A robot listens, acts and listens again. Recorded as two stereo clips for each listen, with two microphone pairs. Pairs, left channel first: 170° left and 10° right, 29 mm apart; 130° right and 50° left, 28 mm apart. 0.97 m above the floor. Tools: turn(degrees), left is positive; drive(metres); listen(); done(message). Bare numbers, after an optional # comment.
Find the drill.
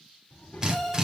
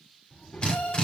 # The drill: 75° right.
turn(-75)
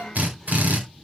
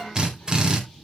done("Facing the drill.")